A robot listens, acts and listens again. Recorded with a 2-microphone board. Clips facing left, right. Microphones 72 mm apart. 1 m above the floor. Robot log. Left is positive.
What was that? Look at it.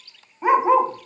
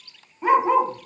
cmd yaw +30
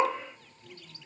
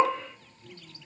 note: So it is at 15° right.
cmd yaw -15
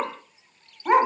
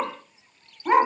end: Facing the dog barking, under 1 m away.